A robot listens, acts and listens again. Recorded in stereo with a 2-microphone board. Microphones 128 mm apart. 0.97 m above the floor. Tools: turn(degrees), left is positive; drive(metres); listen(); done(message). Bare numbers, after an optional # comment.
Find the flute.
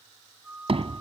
turn(-30)
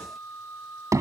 # So it is at 20° left.
turn(20)
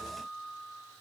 done("Facing the flute.")